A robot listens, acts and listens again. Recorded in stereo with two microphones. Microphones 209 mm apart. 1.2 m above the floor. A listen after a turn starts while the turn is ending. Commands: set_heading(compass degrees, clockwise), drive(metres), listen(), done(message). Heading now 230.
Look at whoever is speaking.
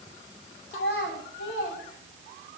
set_heading(165)
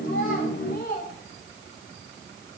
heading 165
set_heading(115)
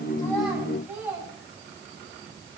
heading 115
set_heading(125)
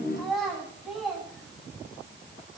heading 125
done("Found it: a child speaking, straight ahead, over 4 m away.")